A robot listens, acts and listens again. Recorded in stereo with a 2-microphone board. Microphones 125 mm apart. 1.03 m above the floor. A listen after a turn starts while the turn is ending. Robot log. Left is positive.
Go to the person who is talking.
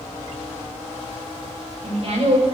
note: The woman speaking: about 55° right or 125° right.
cmd yaw -55
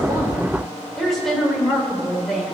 cmd fwd 1.0
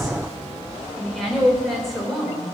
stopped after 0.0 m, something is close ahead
end: Blocked. The woman speaking is further on, straight ahead.